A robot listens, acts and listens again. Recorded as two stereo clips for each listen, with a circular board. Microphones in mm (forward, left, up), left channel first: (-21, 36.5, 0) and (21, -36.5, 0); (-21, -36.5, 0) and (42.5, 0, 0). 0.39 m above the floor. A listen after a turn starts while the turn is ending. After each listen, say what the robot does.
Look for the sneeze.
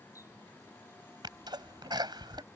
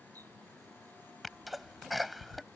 Turn 60° right.
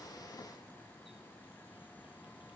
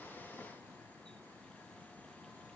I heard a sneeze from this way, but can't make it out now.